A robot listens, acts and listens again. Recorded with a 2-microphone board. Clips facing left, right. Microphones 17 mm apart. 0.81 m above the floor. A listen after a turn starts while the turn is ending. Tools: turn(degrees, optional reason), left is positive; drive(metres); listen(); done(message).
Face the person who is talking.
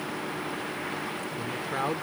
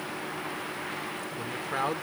turn(degrees=-30)
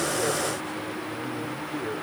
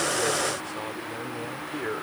turn(degrees=-145, reason="So it is at 145° right.")
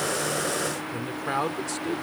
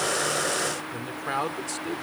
done("Facing the man speaking.")